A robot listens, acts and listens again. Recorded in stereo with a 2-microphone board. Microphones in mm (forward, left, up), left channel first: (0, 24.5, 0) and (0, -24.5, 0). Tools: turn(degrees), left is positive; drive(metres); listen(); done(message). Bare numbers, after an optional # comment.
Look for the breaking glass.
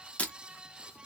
# The breaking glass: about 30° left or 150° left.
turn(30)
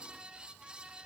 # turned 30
listen()
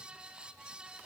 done("I heard breaking glass, but can't make it out now. It was about straight ahead or 120° left.")